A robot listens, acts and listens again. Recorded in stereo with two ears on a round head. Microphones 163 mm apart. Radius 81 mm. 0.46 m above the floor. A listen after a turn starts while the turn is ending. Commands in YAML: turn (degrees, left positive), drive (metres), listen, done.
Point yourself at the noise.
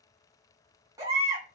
turn: -20
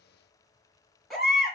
done: "Found it: a baby crying, straight ahead, 2 to 4 m away."